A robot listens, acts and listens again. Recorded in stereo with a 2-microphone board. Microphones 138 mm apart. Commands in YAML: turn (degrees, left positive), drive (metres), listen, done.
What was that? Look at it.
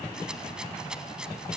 turn: -30
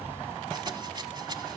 turn: -145
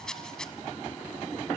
done: "Found it: a rattle, straight ahead, 1 to 2 m away."